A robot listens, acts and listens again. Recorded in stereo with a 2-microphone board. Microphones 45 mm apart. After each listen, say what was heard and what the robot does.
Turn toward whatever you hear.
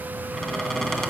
Turn 30° left.
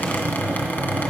So it is at 135° left. Turn 135° left.
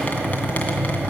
The squeak is now 35° left. Turn 35° left.
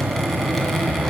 Found it: a squeak, straight ahead, 2 to 4 m away.